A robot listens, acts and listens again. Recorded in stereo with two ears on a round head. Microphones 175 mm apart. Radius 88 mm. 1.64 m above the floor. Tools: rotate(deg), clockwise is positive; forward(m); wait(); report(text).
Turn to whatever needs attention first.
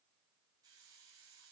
wait()
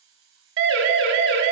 rotate(70)
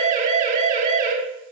rotate(40)
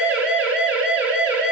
report("Found it: a siren, straight ahead, over 4 m away.")